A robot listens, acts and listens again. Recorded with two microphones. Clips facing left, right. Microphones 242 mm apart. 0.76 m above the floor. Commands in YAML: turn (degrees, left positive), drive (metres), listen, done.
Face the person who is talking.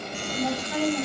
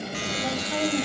turn: -20
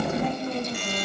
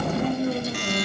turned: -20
turn: -30
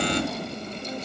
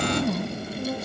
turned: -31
turn: -125
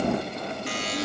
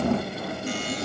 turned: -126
listen: true
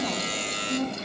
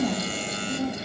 turn: -15
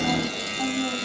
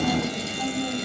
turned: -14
done: "Facing the woman speaking, over 4 m away."